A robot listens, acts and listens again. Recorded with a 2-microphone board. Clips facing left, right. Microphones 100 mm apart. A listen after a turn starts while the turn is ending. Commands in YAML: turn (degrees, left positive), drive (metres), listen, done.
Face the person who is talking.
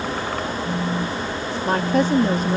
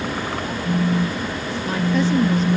turn: 55
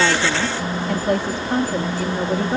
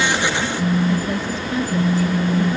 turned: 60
turn: 65
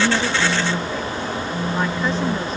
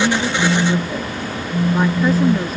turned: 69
listen: true
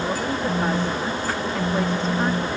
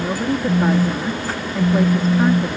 done: "Found it: a woman speaking, straight ahead."